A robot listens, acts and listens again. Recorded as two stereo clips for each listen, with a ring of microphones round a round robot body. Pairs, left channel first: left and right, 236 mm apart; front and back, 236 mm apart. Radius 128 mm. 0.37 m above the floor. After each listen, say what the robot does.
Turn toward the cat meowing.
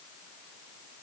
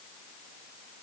Keep listening.
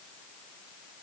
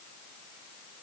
Keep listening.
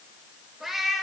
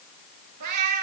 Turn 180° left.
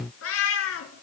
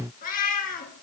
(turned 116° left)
Turn 60° left.
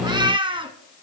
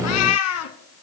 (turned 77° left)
Turn 20° right.
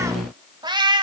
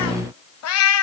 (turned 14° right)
Turn 20° right.
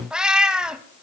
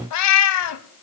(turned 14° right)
Facing the cat meowing.